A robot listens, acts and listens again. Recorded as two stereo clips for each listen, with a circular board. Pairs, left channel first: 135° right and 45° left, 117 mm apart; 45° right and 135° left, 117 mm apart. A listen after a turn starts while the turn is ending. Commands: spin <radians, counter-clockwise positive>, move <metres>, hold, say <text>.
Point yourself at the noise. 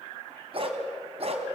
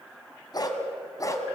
spin 0.26
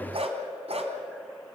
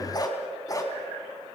spin 0.26
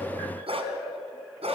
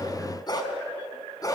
spin 0.26
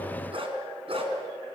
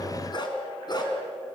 say Found it: a dog barking, straight ahead.